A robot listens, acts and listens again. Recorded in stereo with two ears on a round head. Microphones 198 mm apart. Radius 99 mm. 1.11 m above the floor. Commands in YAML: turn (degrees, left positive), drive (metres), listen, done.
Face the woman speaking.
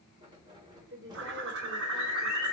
turn: -50
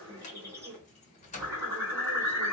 listen: true
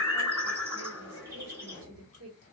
turn: -70
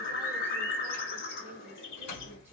listen: true
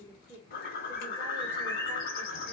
turn: -10
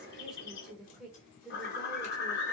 done: "Found it: a woman speaking, straight ahead."